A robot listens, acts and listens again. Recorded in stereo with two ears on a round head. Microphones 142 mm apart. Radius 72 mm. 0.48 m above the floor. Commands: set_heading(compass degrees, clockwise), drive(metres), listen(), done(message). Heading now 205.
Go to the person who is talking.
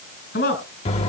set_heading(135)
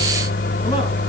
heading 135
listen()
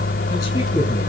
listen()
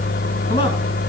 done("I heard a man speaking, but can't make it out now. It was about straight ahead or 40° left. I did not reach it.")